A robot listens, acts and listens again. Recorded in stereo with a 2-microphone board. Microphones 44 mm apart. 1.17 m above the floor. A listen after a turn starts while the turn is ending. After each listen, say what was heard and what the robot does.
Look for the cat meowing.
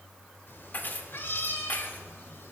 The cat meowing: about 75° left or 105° left. Turn 75° left.
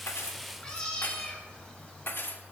So it is at 20° left. Turn 20° left.
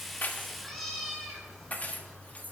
The cat meowing is now 10° left. Turn 10° left.
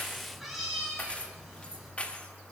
Facing the cat meowing, over 4 m away.